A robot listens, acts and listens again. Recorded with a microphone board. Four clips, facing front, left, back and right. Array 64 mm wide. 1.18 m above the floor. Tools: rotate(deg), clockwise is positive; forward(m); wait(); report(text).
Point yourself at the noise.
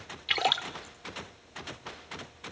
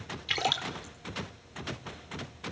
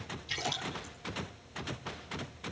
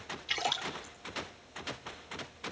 rotate(-10)
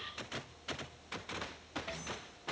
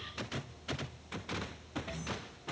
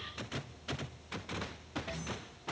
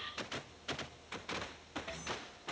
report("Facing where the splash came from. I can't hear it now.")